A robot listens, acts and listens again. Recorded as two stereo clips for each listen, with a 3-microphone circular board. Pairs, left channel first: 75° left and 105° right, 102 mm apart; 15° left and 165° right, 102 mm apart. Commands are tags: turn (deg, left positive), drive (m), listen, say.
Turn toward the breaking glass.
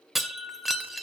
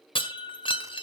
<turn deg="-15"/>
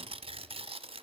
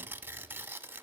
<say>Facing where the breaking glass came from. I can't hear it now.</say>